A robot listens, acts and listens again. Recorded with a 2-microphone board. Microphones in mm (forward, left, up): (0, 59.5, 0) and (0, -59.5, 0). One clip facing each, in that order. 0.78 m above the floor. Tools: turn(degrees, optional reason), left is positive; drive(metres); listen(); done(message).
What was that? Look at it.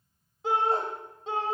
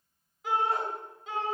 turn(degrees=30, reason="The shout: about 30° left or 150° left.")
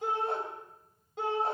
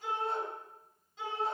turn(degrees=120, reason="So it is at 120° left.")
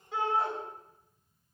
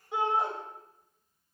turn(degrees=-20, reason="The shout is now 20° right.")
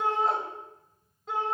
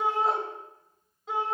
done("Found it: a shout, straight ahead.")